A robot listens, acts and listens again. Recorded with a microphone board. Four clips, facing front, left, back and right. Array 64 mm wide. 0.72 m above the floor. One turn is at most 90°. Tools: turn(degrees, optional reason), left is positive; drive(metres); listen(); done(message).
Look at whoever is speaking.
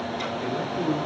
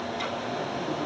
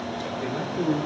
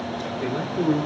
turn(degrees=-90, reason="The man speaking: 100° right.")
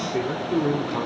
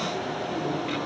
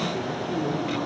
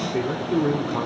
turn(degrees=-55, reason="The man speaking is now 55° right.")
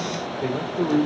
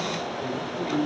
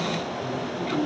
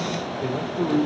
turn(degrees=-30, reason="The man speaking is now 30° right.")
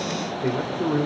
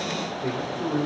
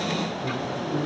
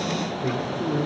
done("Found it: a man speaking, straight ahead.")